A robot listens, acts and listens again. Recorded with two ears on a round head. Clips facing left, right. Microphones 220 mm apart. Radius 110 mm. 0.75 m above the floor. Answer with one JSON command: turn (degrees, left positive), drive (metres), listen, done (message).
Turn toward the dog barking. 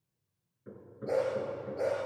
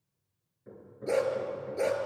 {"turn": -45}
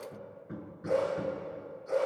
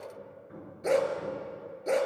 {"turn": -90}
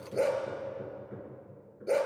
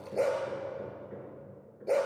{"turn": 20}
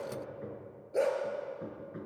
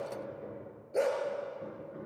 {"done": "Facing the dog barking, 2 to 4 m away."}